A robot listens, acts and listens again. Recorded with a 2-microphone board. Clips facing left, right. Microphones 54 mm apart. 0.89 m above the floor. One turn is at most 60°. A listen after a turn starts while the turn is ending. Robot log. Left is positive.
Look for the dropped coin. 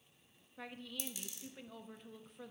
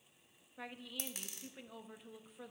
note: The dropped coin: about 50° right or 130° right.
cmd yaw -50
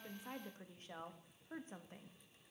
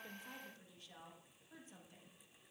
cmd idle
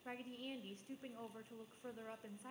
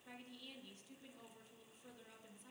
end: I heard a dropped coin, but can't make it out now. It was about straight ahead or 80° right.